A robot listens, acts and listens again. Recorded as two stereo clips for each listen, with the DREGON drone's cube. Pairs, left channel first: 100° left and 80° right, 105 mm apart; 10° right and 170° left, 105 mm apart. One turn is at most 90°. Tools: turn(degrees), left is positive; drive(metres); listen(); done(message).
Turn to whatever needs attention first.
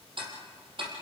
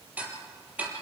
listen()
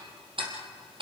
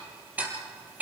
listen()
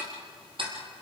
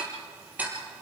done("I can't make out anything urgent to turn to.")